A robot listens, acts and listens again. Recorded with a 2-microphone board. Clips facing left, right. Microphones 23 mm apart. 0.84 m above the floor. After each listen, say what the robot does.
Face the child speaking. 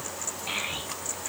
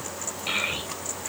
Turn 70° right.
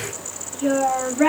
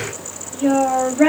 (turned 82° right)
Turn 15° right.
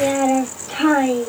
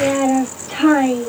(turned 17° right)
Turn 10° left.
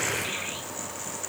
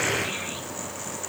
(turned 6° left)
Keep listening.
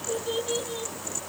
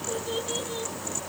Turn 10° left.
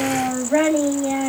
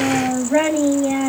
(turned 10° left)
Found it: a child speaking, straight ahead.